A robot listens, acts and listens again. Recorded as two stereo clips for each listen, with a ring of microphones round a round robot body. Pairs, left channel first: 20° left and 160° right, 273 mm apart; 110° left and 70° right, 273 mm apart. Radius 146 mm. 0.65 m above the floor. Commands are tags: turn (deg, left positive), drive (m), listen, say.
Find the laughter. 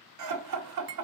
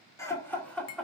<turn deg="-160"/>
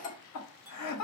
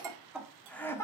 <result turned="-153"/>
<turn deg="35"/>
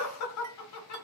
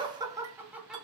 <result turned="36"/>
<turn deg="20"/>
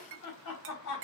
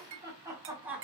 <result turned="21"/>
<turn deg="20"/>
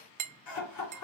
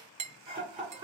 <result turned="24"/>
<say>Found it: laughter, straight ahead, 2 to 4 m away.</say>